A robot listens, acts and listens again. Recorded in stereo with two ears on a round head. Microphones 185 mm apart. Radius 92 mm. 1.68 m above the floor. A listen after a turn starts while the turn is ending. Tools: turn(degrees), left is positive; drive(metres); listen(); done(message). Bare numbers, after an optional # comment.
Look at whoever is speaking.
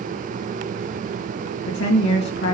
# The woman speaking: about 60° left or 120° left.
turn(60)
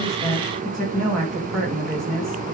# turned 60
done("Found it: a woman speaking, straight ahead, 2 to 4 m away.")